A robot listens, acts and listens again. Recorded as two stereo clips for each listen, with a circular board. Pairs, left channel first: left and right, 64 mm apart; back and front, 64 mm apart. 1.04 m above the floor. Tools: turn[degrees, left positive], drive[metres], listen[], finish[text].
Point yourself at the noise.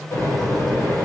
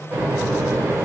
Thought: The microwave: 55° left.
Action: turn[55]
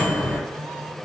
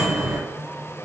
Thought: The microwave is now 15° left.
Action: turn[15]
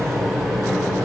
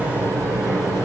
Action: finish[Found it: a microwave, straight ahead.]